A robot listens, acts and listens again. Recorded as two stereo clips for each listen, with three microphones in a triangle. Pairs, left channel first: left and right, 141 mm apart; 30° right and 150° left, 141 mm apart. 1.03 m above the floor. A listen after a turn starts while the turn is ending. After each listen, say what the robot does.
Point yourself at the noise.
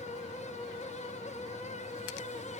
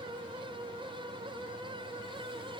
Keep listening.
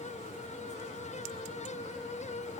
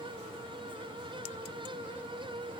Keep listening.
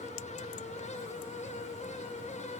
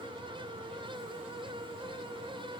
I can't make out anything.